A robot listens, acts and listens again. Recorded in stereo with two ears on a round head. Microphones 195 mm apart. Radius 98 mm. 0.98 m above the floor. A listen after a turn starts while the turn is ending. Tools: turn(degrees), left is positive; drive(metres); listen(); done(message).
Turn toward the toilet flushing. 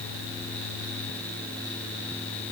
listen()
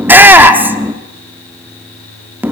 listen()
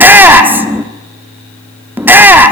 done("I can't make out a toilet flushing to turn to.")